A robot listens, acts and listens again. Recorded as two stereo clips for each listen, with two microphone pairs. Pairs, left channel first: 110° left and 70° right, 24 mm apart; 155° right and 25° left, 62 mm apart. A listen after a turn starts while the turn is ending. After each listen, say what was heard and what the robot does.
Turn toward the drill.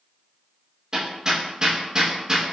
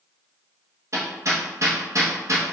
Keep listening.
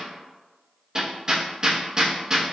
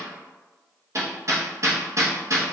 Keep listening.
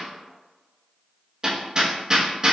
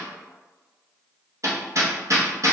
I can't make out a drill, only hammering.